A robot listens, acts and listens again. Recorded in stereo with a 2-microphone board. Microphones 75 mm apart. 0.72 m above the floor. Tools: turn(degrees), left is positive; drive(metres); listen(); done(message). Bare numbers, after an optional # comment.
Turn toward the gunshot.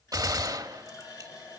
# The gunshot: about 50° right or 130° right.
turn(-50)
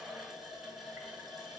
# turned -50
listen()
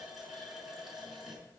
done("I heard a gunshot, but can't make it out now. It was about straight ahead or 80° right.")